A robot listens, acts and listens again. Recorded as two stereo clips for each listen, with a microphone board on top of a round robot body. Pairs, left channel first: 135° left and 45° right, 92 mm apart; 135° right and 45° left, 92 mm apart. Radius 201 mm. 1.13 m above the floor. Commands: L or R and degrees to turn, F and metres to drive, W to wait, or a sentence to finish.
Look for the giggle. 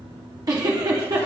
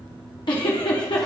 R95
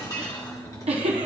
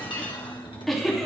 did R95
R50
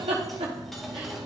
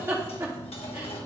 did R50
R15
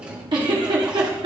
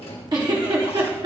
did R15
Found it: a giggle, straight ahead.